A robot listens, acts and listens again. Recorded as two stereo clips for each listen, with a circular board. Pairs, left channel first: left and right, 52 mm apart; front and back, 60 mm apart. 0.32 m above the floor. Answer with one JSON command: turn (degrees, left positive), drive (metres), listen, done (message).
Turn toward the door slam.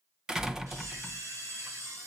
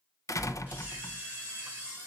{"turn": -10}
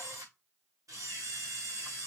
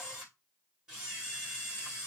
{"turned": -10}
{"done": "Facing where the door slam came from. I can't hear it now."}